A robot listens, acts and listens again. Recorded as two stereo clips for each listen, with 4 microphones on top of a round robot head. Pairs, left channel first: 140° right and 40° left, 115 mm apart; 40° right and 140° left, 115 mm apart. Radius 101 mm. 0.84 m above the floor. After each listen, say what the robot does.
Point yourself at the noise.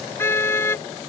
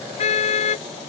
Turn 70° right.
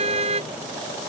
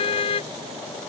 Found it: a car horn, straight ahead.